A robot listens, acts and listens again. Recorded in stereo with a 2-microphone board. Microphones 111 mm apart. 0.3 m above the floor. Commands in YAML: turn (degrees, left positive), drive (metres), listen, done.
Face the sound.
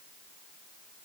listen: true
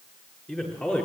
turn: 30
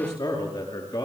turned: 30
turn: 135
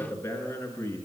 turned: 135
turn: 20
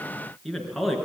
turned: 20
done: "Facing the man speaking, over 4 m away."